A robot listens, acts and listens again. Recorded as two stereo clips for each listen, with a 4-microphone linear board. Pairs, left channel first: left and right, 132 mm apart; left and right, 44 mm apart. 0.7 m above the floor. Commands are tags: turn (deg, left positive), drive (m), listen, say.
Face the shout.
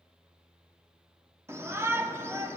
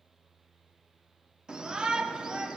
<turn deg="-20"/>
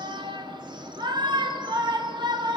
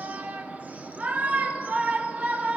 <turn deg="-140"/>
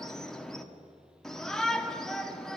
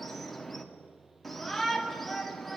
<say>Facing the shout.</say>